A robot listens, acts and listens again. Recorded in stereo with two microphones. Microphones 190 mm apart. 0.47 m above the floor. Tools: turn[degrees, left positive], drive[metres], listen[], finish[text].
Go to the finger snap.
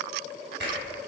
Thought: The finger snap: about 65° right or 115° right.
Action: turn[-65]
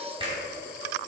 Thought: So it is at 30° right.
Action: turn[-30]
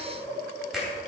Action: drive[1.0]
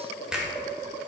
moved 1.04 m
Action: drive[1.0]
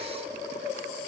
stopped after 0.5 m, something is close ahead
Action: listen[]
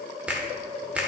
Thought: The finger snap is now 10° right.
Action: turn[-10]
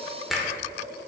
Action: finish[I am next to the finger snap.]